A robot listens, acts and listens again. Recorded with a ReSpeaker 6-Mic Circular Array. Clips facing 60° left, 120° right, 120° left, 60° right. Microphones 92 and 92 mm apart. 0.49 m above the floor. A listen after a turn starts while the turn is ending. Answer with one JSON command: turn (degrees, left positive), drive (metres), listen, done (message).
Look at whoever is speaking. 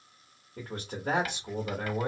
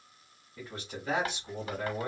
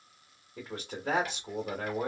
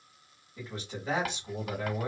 {"turn": 95}
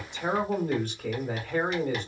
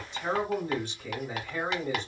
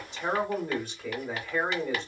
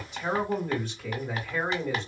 {"turn": 35}
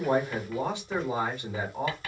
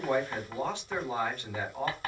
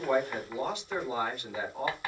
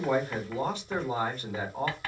{"done": "Found it: a man speaking, straight ahead."}